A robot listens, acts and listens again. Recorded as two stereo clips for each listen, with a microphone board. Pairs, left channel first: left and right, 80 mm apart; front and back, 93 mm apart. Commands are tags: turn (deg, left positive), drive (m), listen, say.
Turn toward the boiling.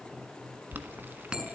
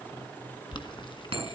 <turn deg="-25"/>
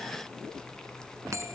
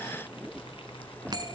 <listen/>
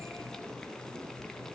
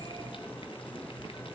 <listen/>
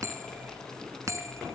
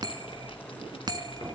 <say>Facing where the boiling came from. I can't hear it now.</say>